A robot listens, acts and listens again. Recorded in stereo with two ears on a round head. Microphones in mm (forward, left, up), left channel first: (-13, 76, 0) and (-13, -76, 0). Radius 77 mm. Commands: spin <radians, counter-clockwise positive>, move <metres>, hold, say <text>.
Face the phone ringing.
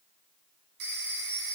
spin -1.57
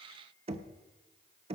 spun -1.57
hold
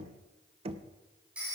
spin -0.17
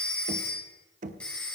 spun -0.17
say Facing the phone ringing, 2 to 4 m away.